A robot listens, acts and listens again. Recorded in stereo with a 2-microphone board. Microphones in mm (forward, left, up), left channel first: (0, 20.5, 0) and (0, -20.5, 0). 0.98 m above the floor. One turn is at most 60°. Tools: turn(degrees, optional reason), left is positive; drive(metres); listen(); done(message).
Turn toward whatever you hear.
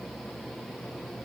listen()
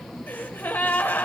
turn(degrees=55, reason="The gasp: about 55° left or 125° left.")
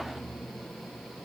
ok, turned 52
listen()
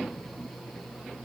done("I heard a gasp, but can't make it out now. It was about 5° left or 70° left.")